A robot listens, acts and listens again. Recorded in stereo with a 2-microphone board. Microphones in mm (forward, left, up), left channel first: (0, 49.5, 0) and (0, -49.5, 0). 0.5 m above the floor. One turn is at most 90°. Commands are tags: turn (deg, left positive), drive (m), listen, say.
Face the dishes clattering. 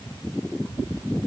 <listen/>
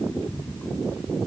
<listen/>
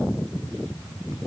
<say>I can't make out dishes clattering to turn to.</say>